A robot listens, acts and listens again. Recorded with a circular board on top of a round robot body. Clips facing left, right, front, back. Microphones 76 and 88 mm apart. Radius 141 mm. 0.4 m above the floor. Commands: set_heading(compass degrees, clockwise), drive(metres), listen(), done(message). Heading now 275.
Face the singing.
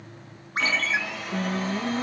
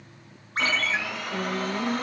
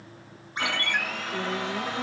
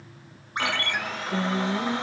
set_heading(60)
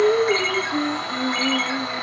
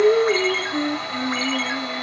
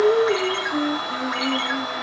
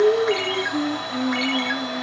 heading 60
done("Facing the singing.")